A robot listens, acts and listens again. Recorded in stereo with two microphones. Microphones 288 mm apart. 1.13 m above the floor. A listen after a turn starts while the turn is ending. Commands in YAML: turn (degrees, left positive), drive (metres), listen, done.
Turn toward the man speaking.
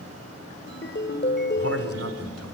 turn: -55
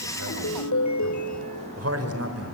turn: -55
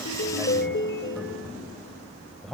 done: "Facing the man speaking, over 4 m away."